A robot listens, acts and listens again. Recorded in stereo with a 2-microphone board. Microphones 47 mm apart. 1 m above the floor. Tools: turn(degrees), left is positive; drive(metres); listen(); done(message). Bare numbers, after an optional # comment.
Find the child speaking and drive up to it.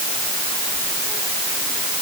listen()
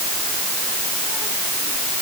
listen()
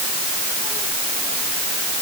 done("I can't make out a child speaking.")